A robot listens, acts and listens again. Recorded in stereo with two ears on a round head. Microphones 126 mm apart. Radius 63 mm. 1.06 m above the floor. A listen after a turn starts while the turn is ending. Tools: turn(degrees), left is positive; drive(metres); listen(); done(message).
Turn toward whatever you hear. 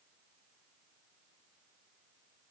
listen()
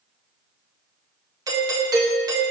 turn(degrees=-25)
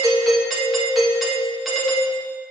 done("Found it: a doorbell, straight ahead.")